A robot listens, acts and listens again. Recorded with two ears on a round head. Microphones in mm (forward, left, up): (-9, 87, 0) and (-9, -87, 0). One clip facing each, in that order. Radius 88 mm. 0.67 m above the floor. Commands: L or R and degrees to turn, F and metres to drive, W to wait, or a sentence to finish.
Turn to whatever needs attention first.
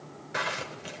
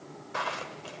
W
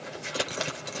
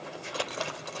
W
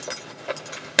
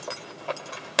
I can't make out anything urgent to turn to.